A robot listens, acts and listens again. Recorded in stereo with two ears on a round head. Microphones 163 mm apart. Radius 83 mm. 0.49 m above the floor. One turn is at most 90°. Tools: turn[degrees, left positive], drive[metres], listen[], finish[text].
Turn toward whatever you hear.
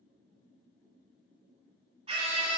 Thought: The scream: about 35° right or 145° right.
Action: turn[-35]
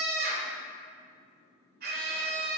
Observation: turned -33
Thought: So it is at 105° right.
Action: turn[-90]
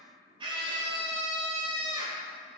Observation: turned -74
Thought: The scream is now 30° right.
Action: turn[-30]
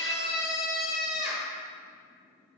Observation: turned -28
Action: finish[Found it: a scream, straight ahead.]